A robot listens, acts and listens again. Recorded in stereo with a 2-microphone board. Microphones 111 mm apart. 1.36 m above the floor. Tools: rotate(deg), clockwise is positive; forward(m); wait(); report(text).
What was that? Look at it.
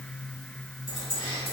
rotate(-55)
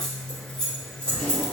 report("Found it: keys jangling, straight ahead.")